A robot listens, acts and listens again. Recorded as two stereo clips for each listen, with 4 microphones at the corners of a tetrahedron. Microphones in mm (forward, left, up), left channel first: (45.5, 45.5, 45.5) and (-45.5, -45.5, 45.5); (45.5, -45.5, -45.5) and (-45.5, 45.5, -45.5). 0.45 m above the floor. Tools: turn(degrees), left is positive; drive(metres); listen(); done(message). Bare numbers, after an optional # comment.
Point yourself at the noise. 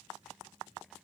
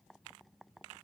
listen()
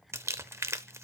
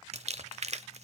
# The crumpling: 155° left.
turn(155)
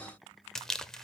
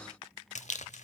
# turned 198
# The crumpling is now 40° right.
turn(-40)
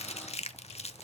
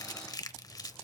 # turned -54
# The crumpling is now 15° left.
turn(15)
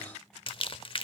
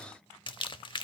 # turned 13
done("Found it: crumpling, straight ahead.")